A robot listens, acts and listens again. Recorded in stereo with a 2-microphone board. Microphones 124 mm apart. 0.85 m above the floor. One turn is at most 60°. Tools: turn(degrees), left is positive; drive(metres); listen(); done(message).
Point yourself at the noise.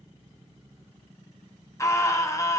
turn(degrees=25)
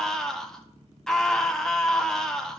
done("Found it: a scream, straight ahead, 1 to 2 m away.")